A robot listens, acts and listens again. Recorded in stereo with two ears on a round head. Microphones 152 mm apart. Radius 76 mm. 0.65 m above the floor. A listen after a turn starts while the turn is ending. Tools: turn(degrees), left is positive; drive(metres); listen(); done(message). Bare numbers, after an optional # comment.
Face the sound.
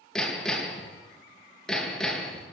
turn(30)
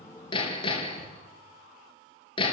# So it is at 150° left.
turn(150)
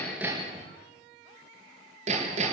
# The hammering is now 45° right.
turn(-45)
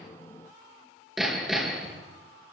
done("Found it: hammering, straight ahead.")